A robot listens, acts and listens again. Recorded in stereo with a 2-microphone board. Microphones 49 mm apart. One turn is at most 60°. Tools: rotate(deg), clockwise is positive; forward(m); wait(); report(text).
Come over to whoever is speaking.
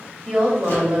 rotate(30)
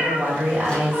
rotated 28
rotate(60)
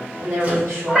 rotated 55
rotate(60)
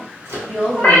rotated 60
rotate(25)
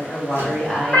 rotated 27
forward(1.0)
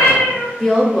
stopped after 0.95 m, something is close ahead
report("I am next to the woman speaking.")